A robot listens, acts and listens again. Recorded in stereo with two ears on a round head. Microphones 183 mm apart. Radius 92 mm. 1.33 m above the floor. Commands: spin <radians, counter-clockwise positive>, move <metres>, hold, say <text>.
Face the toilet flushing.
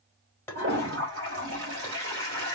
spin -1.31
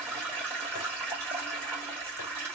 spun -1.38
spin -0.26
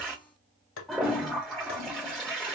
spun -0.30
say Found it: a toilet flushing, straight ahead.